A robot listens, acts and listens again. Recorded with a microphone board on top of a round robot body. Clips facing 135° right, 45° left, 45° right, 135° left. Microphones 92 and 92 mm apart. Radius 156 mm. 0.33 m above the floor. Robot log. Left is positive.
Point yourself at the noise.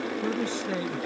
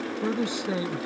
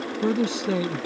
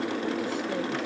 note: The man speaking: 30° right.
cmd yaw -30
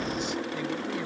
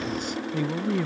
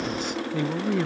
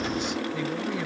end: Found it: a man speaking, straight ahead.